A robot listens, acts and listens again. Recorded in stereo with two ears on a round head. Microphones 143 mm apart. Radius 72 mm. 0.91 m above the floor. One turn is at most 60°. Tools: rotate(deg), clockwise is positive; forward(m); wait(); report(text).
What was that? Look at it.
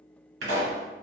rotate(60)
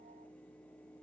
wait()
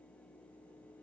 report("I heard a pop, but can't make it out now. It was about 10° right or 50° right.")